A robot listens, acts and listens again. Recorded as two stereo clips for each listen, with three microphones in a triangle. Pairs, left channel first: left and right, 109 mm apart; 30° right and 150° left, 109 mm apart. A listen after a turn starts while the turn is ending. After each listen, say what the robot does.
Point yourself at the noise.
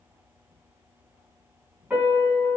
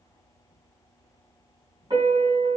Turn 165° right.
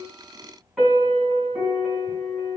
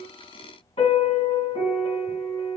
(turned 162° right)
Facing the piano.